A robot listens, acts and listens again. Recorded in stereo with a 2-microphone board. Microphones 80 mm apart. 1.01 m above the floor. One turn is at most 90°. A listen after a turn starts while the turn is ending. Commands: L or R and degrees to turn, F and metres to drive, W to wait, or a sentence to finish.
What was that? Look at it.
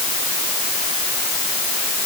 W
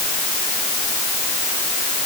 W
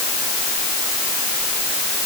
I can't make out anything to turn to.